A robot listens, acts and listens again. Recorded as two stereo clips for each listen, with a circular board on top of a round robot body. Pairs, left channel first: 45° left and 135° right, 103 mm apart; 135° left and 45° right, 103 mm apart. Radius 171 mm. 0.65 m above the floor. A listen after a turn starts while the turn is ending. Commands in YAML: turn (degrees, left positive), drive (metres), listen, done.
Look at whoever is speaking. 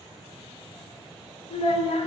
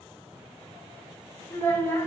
turn: 65
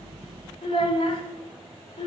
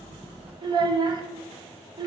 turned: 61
done: "Facing the child speaking, 1 to 2 m away."